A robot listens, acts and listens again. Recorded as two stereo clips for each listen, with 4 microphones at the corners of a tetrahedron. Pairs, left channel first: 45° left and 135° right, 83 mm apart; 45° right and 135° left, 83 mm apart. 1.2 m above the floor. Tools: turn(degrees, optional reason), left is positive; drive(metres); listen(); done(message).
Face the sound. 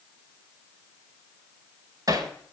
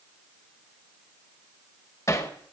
turn(degrees=-95, reason="The hammering: 95° right.")
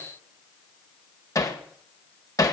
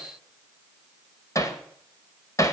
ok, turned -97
done("Facing the hammering.")